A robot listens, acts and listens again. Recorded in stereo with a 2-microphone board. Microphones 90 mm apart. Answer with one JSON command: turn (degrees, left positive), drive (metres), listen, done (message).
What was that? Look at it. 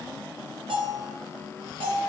{"turn": -75}
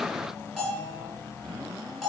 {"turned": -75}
{"done": "Found it: a bell, straight ahead."}